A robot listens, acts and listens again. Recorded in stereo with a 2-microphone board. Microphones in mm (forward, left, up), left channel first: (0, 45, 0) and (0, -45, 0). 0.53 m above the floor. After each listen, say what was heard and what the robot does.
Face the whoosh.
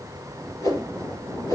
The whoosh: about 45° left or 135° left. Turn 45° left.
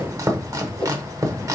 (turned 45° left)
So it is at 90° left. Turn 90° left.
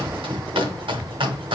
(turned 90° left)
Keep listening.
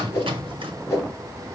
The whoosh is now 30° left. Turn 30° left.
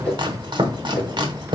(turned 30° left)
The whoosh is now 15° left. Turn 15° left.
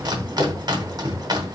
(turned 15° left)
Keep listening.
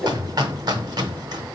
Facing the whoosh.